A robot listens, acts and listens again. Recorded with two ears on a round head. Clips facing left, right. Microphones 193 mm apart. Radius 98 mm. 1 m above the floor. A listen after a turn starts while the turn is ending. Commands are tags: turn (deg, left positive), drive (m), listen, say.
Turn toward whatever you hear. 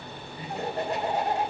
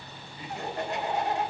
<turn deg="30"/>
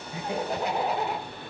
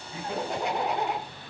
<say>Found it: laughter, straight ahead, 2 to 4 m away.</say>